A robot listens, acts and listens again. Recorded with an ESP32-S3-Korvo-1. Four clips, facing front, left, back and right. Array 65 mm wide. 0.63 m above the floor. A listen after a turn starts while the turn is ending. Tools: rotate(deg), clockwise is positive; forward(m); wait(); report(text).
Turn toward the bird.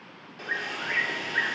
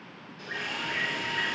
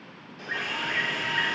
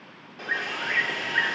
rotate(65)
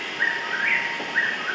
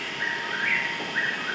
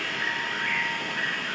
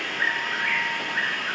report("Found it: a bird, straight ahead.")